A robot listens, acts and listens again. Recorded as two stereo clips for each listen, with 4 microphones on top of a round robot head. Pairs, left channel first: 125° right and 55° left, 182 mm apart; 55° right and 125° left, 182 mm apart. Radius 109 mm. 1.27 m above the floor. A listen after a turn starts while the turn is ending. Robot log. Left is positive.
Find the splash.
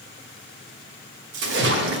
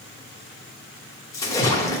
note: The splash: 20° left.
cmd yaw +20
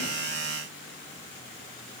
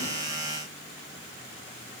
end: I heard a splash from this way, but can't make it out now.